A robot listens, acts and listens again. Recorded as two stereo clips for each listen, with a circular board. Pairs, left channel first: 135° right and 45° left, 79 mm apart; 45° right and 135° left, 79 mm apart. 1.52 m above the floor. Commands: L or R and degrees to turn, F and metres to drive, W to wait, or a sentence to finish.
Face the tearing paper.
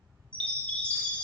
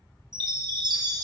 W
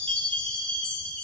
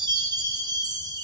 W
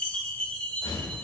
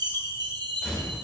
R125
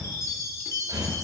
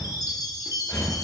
Facing the tearing paper.